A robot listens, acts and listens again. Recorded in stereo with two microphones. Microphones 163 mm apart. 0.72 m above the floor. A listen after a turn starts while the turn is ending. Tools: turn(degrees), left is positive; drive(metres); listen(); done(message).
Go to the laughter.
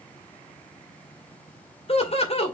turn(degrees=40)
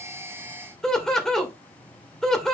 drive(metres=1.0)
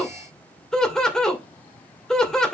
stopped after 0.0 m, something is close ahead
done("Blocked. The laughter is further on, straight ahead.")